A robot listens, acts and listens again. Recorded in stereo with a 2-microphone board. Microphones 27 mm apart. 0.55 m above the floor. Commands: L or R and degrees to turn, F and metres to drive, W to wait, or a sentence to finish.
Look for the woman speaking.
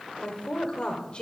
L35
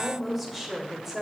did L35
R15
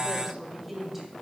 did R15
R10
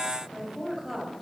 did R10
R10
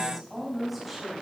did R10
Facing the woman speaking, 2 to 4 m away.